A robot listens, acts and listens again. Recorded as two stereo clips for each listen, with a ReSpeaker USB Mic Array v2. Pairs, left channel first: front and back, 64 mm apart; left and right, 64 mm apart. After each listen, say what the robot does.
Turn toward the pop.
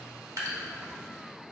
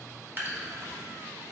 Keep listening.
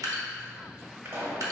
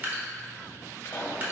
Turn 135° left.
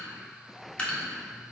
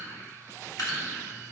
I heard a pop from this way, but can't make it out now.